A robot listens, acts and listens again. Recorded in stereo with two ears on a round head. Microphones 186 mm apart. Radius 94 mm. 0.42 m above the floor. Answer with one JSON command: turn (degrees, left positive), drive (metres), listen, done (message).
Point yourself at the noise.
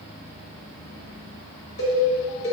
{"turn": 75}
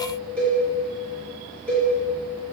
{"done": "Facing the cowbell."}